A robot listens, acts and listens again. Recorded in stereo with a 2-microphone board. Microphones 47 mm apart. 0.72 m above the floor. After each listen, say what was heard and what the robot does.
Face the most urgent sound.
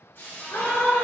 The scream: about 55° left or 125° left. Turn 55° left.
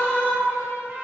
So it is at 55° left. Turn 55° left.
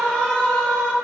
The scream is now 15° left. Turn 15° left.
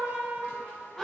Found it: a scream, straight ahead, 1 to 2 m away.